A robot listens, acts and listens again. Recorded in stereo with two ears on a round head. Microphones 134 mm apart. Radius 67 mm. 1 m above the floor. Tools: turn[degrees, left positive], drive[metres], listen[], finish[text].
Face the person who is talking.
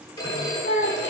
Action: turn[90]
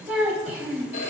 Thought: So it is at 10° right.
Action: turn[-10]
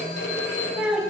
Action: finish[Facing the child speaking, 2 to 4 m away.]